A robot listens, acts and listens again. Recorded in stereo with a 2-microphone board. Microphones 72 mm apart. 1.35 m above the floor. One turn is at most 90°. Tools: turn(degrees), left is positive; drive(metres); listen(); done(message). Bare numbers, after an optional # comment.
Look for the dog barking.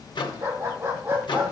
# The dog barking: about 30° right or 150° right.
turn(-30)
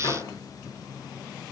listen()
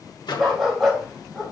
done("Facing the dog barking.")